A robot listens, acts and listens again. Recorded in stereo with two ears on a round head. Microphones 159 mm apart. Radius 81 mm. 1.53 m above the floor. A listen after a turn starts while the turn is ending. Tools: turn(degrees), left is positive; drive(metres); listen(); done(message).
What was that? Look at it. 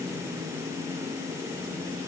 listen()
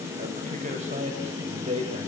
turn(degrees=-35)
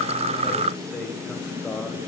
done("Facing the man speaking.")